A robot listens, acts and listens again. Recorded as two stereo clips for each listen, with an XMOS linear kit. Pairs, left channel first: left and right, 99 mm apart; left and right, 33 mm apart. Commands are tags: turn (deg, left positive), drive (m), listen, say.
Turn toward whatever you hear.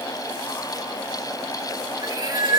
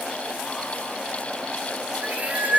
<turn deg="-45"/>
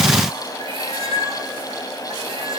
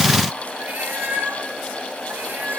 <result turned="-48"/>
<turn deg="-65"/>
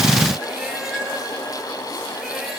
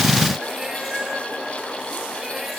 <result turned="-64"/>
<listen/>
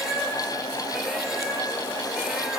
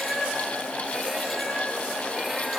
<say>Facing the cat meowing.</say>